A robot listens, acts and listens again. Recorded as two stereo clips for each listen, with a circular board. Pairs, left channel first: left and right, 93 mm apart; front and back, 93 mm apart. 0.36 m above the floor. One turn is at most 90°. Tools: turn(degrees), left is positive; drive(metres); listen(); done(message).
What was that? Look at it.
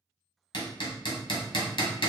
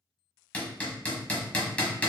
turn(degrees=75)
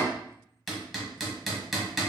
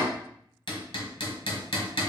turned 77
done("Found it: hammering, straight ahead, 1 to 2 m away.")